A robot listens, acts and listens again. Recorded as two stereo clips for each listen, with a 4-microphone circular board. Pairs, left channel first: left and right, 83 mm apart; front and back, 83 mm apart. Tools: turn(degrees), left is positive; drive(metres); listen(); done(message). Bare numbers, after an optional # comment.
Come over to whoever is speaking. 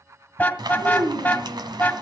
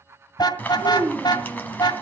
# The child speaking: 100° right.
turn(-100)
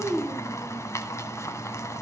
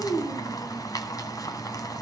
drive(1.0)
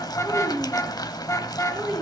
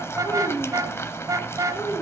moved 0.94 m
drive(1.0)
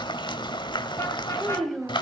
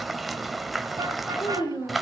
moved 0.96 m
drive(1.0)
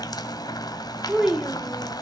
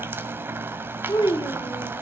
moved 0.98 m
# The child speaking is now 10° right.
turn(-10)
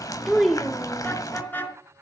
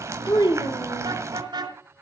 drive(1.0)
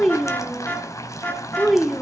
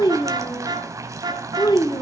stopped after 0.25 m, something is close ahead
done("I am next to the child speaking.")